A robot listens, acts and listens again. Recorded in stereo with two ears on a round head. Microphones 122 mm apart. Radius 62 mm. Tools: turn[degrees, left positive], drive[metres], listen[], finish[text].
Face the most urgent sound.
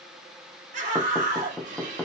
Thought: The scream: about 60° right or 120° right.
Action: turn[-60]
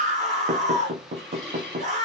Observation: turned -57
Thought: So it is at 55° right.
Action: turn[-55]
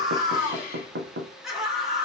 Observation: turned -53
Action: finish[Found it: a scream, straight ahead.]